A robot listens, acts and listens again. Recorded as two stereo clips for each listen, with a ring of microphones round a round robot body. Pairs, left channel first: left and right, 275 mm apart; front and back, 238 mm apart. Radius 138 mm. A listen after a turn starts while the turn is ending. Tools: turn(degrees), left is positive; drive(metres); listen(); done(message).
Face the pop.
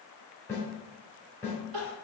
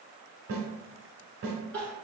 listen()
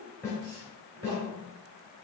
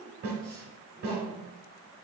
listen()
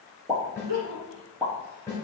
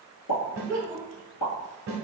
done("Facing the pop, 1 to 2 m away.")